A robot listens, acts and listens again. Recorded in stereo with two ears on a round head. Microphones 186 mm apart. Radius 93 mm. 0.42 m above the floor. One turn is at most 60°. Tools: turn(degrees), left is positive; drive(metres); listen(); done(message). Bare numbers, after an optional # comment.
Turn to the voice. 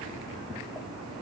listen()
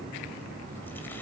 listen()
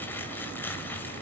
done("I can't make out anyone speaking to turn to.")